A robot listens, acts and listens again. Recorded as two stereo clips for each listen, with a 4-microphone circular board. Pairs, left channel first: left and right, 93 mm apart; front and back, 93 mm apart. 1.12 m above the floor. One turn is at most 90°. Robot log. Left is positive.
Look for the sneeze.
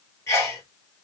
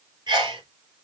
note: The sneeze: 140° left.
cmd yaw +90
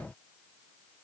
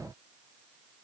note: Nothing new. It was at 50° left.
cmd yaw +50
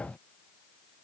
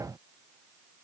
end: Facing where the sneeze came from. I can't hear it now.